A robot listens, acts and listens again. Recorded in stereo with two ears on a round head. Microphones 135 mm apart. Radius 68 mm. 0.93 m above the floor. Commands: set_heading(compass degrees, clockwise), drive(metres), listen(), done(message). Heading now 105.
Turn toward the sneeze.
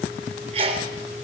set_heading(145)
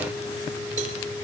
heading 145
listen()
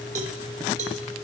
done("I heard a sneeze, but can't make it out now. It was about straight ahead or 100° right.")